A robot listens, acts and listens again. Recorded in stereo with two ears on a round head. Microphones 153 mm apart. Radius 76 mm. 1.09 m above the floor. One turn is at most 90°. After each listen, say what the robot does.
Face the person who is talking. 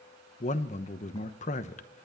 Turn 45° left.
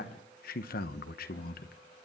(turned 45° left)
Turn 80° left.
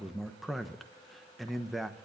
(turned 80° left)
Found it: a man speaking, straight ahead, under 1 m away.